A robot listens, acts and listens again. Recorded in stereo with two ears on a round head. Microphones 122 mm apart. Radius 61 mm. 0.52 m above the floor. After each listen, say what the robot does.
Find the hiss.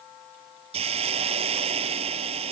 Turn 45° right.
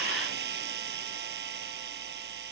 Turn 90° right.
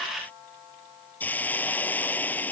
Turn 10° left.
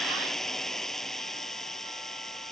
Found it: a hiss, straight ahead.